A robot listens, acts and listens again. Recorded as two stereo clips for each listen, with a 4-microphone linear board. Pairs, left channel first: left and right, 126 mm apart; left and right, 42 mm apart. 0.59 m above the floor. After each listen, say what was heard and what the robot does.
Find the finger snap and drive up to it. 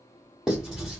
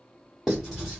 Keep listening.
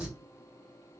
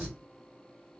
Keep listening.
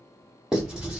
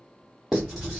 I can't make out a finger snap, only writing.